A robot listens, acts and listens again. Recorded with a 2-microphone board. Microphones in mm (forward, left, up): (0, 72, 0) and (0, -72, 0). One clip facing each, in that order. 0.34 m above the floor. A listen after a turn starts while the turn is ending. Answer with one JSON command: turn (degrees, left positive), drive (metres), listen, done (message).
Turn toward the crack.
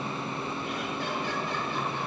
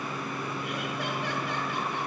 {"listen": true}
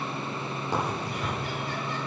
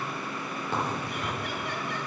{"turn": 30}
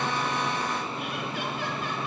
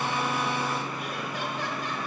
{"listen": true}
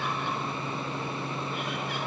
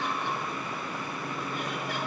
{"done": "I heard a crack, but can't make it out now. It was about 15° right or 135° left."}